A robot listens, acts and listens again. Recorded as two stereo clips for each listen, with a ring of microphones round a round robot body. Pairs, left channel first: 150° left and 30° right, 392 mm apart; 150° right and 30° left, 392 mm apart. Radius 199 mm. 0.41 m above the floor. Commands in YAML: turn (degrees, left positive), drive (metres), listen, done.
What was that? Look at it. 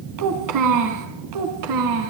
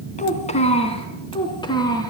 turn: -70
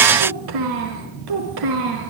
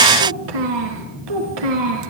done: "Found it: a child speaking, straight ahead, over 4 m away."